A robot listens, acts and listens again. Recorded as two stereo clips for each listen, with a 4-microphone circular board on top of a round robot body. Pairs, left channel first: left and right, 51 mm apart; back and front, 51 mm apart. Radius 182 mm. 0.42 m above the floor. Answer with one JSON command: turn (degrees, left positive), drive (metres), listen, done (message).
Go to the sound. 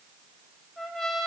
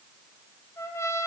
{"turn": 180}
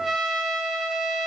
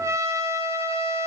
{"turn": -10}
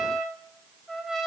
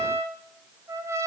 {"drive": 1.0}
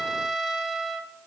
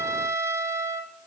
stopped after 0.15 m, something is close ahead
{"done": "Blocked. The trumpet is further on, straight ahead."}